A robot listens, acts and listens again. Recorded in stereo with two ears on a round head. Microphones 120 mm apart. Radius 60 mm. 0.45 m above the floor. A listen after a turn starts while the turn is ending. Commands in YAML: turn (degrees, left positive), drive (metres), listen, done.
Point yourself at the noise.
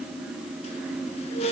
turn: 50
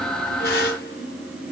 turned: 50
turn: 80
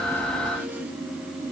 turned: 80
listen: true
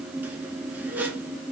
turn: -15
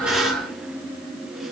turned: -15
done: "Found it: a squeak, straight ahead."